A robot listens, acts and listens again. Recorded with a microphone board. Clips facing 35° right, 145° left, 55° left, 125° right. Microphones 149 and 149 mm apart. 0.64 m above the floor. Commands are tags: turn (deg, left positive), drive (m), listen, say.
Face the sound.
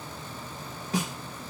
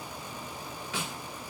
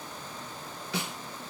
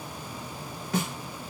<turn deg="-85"/>
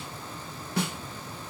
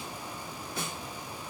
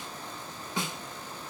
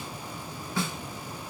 <turn deg="-15"/>
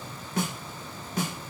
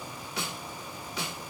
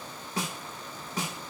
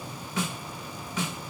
<say>Facing the snare drum.</say>